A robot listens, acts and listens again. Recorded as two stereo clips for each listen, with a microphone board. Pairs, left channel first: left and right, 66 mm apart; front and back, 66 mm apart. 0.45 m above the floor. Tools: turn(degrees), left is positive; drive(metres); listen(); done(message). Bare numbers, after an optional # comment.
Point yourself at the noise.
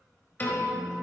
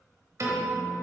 # The piano: 150° left.
turn(150)
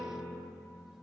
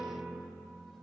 # The piano is now 35° right.
turn(-35)
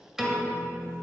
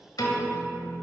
done("Facing the piano.")